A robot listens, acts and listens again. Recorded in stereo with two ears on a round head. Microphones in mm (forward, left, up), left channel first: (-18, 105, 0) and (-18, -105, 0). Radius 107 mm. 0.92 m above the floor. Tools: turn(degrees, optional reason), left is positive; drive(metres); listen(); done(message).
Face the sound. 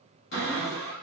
turn(degrees=50, reason="The cupboard door: about 50° left or 130° left.")
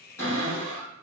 turn(degrees=15, reason="So it is at 15° left.")
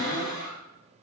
done("Facing the cupboard door.")